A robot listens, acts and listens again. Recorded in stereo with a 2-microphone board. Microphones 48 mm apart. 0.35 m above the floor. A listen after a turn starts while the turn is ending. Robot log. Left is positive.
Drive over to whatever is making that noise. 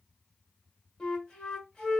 cmd yaw +30
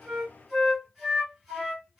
note: So it is at 15° right.
cmd yaw -15
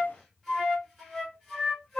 cmd fwd 1.0
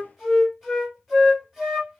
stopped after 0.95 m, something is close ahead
note: The flute is now 10° right.
cmd yaw -10
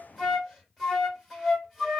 end: I am next to the flute.